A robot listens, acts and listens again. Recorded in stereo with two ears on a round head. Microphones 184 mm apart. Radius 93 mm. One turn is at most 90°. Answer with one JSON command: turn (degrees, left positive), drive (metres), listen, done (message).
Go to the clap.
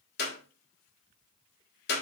{"turn": 50}
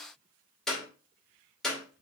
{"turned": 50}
{"drive": 1.0}
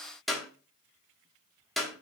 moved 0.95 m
{"drive": 1.0}
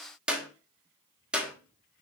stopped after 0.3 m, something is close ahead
{"done": "Arrived at the clap, straight ahead."}